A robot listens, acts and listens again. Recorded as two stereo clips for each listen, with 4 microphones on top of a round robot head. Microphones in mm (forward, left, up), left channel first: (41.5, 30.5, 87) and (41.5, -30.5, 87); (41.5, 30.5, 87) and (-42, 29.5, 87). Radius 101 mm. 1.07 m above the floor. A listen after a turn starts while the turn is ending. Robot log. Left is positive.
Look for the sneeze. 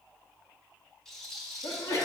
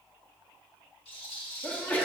note: The sneeze: 70° left.
cmd yaw +70
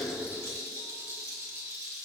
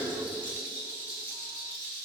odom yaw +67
end: I heard a sneeze from this way, but can't make it out now.